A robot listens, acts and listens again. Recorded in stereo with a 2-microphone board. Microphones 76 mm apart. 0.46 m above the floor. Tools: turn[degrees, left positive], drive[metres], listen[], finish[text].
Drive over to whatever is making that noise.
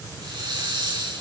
Action: turn[-90]
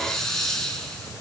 Action: drive[1.0]
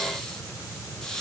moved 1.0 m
Action: drive[1.0]
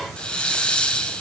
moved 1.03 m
Thought: The hiss is now 15° left.
Action: turn[15]
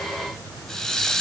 Action: drive[1.0]
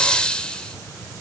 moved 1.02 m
Thought: The hiss is now 15° left.
Action: turn[15]
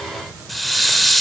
Action: drive[1.0]
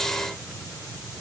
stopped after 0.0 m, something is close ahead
Action: listen[]
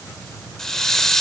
Action: finish[Arrived at the hiss, straight ahead.]